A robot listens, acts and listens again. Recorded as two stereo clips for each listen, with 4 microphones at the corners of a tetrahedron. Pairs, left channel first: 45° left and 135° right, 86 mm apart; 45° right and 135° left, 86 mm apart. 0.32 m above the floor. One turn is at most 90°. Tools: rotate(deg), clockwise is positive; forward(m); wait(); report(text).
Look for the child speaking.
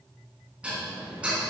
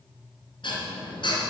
wait()
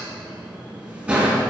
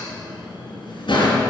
wait()
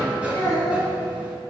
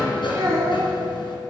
rotate(-90)
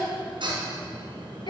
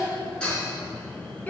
rotate(-25)
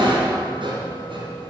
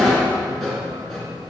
wait()
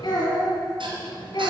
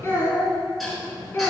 rotate(-15)
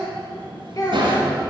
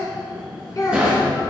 report("Found it: a child speaking, straight ahead, 1 to 2 m away.")